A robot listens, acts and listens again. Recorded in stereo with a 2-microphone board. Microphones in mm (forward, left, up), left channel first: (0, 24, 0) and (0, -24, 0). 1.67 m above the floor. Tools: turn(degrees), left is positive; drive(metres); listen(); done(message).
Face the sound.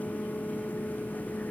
listen()
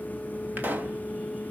turn(degrees=-40)
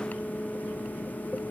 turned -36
listen()
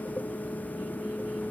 done("I heard a pop, but can't make it out now. It was about straight ahead or 105° right.")